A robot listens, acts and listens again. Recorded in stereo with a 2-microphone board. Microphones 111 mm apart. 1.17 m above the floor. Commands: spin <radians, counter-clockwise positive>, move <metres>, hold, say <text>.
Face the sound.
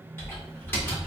spin 0.35
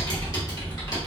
spin 2.44
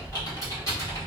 spin 0.61
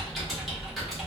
say Facing the typing on a keyboard.